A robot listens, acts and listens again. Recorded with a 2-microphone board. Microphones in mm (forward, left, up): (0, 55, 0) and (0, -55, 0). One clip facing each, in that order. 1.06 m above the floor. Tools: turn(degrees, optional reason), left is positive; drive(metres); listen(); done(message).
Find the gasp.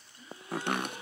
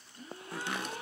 turn(degrees=-60, reason="The gasp: about 60° right or 120° right.")
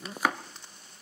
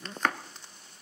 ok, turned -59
listen()
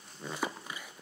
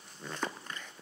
done("I heard a gasp, but can't make it out now. It was about straight ahead or 65° right.")